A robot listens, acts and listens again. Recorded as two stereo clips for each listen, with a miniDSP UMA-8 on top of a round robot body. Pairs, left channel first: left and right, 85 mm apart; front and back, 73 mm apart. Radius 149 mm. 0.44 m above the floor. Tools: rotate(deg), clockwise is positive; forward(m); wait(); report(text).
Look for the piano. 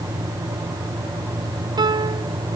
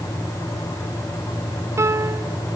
rotate(130)
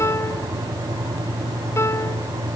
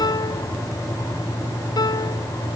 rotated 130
rotate(-30)
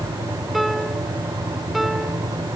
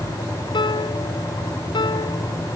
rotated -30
report("Found it: a piano, straight ahead.")